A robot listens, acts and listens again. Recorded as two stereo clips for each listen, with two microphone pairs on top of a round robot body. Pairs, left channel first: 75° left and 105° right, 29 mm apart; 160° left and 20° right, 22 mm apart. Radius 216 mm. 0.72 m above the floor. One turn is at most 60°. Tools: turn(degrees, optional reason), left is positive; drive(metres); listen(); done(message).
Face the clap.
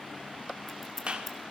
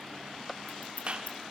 turn(degrees=-50, reason="The clap: 50° right.")
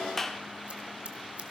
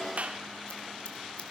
done("Facing the clap.")